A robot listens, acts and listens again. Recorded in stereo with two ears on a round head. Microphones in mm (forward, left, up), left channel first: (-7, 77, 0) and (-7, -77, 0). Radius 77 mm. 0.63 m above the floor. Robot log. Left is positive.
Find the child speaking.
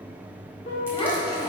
note: The child speaking: about 25° left or 155° left.
cmd yaw +25
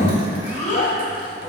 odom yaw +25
note: The child speaking: about 40° left or 140° left.
cmd yaw +40
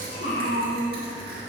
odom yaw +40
note: So it is at 110° left.
cmd yaw +110
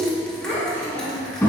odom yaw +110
note: The child speaking is now 15° left.
cmd yaw +15
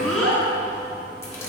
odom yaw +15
end: Found it: a child speaking, straight ahead, over 4 m away.